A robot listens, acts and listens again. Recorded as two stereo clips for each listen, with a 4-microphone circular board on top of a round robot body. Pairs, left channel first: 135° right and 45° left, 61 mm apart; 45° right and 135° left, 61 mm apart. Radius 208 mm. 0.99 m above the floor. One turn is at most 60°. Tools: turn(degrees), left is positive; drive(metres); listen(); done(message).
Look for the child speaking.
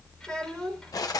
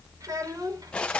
turn(degrees=60)
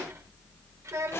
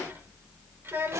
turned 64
turn(degrees=60)
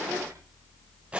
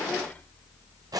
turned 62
turn(degrees=20)
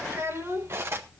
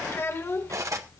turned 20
done("Found it: a child speaking, straight ahead.")